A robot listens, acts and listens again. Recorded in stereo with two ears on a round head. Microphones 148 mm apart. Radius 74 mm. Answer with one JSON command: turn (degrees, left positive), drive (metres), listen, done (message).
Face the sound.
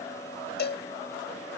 {"turn": 70}
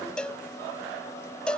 {"done": "Facing the cowbell."}